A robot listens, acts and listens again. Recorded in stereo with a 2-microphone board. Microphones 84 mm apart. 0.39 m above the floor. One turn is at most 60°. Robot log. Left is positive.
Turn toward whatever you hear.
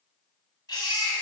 note: The baby crying: about 55° left or 125° left.
cmd yaw +55
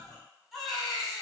end: Facing the baby crying.